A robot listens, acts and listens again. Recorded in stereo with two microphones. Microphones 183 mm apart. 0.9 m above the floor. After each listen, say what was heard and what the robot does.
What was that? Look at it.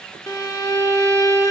The violin: about 15° left or 165° left. Turn 15° left.
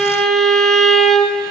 Facing the violin, under 1 m away.